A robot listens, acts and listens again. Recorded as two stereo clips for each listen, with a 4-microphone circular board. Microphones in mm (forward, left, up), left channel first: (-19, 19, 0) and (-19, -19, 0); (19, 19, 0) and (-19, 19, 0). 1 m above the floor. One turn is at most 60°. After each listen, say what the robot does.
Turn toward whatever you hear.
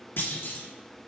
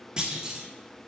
Turn 60° left.
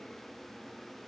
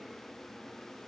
Turn 50° left.
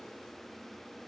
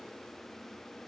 Facing where the clunk came from. I can't hear it now.